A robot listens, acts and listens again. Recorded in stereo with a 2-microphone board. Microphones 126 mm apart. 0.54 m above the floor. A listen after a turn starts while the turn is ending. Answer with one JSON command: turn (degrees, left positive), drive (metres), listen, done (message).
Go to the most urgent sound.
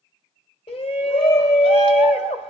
{"turn": 50}
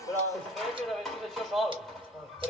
{"drive": 1.0}
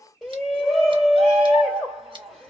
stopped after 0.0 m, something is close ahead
{"done": "Blocked. The shout is further on, straight ahead."}